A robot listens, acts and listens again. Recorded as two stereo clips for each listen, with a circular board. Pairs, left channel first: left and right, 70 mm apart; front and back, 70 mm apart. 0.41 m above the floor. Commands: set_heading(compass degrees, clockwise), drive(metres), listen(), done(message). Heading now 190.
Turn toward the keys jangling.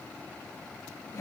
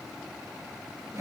listen()
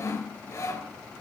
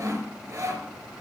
listen()
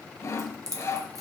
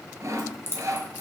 set_heading(245)
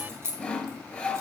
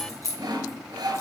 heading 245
set_heading(285)
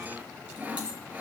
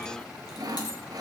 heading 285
listen()
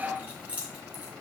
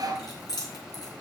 set_heading(305)
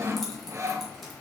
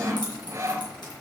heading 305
listen()
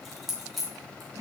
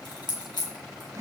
done("Facing the keys jangling.")